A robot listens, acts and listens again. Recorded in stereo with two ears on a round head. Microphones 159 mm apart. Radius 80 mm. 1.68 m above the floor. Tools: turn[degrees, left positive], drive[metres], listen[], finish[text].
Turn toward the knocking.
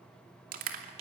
Action: listen[]
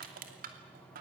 Action: listen[]
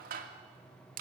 Action: finish[I can't make out knocking, only crushing.]